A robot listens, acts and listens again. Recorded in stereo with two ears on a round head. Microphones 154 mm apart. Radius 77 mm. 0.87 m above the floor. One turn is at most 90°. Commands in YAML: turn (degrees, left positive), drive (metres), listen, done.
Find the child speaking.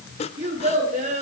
turn: -40
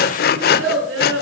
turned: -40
turn: -90
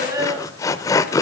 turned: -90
turn: -20
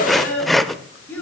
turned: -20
turn: 10
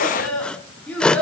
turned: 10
done: "Found it: a child speaking, straight ahead."